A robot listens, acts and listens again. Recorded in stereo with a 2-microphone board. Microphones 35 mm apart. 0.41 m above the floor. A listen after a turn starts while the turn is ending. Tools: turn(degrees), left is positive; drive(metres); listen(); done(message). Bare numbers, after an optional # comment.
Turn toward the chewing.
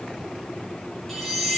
listen()
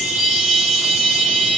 listen()
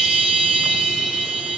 done("I can't make out chewing to turn to.")